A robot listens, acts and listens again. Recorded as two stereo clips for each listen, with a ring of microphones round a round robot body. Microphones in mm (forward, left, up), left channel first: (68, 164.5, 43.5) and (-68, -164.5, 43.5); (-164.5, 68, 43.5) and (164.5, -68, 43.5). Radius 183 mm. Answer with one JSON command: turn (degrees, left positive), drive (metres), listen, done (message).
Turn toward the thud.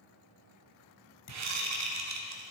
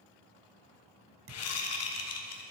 {"turn": 30}
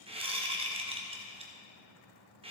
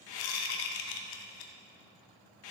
{"done": "Facing where the thud came from. I can't hear it now."}